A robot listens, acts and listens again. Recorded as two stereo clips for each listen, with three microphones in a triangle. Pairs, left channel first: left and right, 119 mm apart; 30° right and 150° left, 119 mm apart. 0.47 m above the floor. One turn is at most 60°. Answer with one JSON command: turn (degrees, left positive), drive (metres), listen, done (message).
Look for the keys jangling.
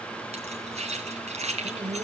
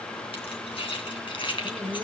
{"turn": -60}
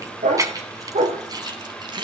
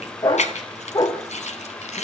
{"turn": -40}
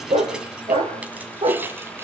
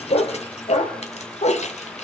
{"listen": true}
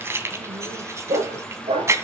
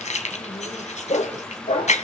{"turn": -25}
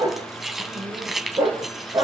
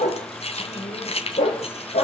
{"done": "Found it: keys jangling, straight ahead."}